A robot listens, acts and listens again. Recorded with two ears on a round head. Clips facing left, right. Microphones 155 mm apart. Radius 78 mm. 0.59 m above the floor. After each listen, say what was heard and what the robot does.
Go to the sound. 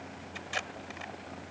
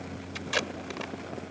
The tape being pulled: about 70° right or 110° right. Turn 70° right.
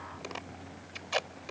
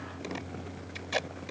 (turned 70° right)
So it is at 10° right. Turn 10° right.
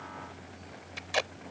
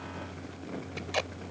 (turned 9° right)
Drive 1.0 m forward.
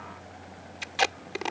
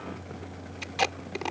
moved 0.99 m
Drive 1.0 m forward.
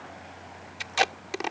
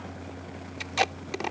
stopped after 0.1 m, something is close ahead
Arrived at the tape being pulled, straight ahead.